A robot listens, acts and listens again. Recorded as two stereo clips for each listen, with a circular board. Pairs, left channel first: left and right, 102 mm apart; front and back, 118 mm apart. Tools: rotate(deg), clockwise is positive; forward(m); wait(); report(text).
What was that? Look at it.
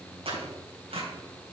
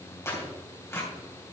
rotate(65)
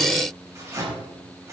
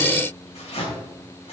rotate(30)
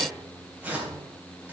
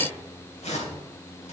rotate(15)
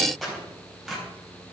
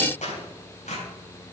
report("Found it: tearing paper, straight ahead, 2 to 4 m away.")